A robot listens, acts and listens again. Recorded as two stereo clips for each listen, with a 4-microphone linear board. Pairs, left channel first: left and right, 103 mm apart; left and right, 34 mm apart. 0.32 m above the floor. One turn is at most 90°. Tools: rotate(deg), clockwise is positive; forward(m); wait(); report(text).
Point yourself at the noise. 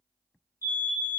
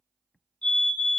rotate(-25)
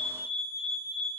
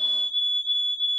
report("Found it: a fire alarm, straight ahead, over 4 m away.")